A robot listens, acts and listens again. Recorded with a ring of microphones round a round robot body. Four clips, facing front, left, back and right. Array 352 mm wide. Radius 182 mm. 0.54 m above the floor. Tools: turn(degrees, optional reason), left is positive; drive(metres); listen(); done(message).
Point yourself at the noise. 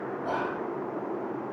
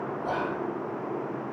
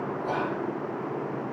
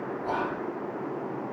turn(degrees=105, reason="The whispering: 105° left.")
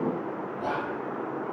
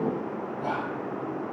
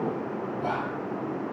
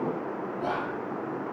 turn(degrees=-25, reason="The whispering is now 25° right.")
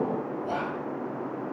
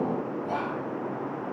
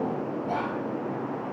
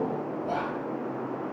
done("Facing the whispering, 1 to 2 m away.")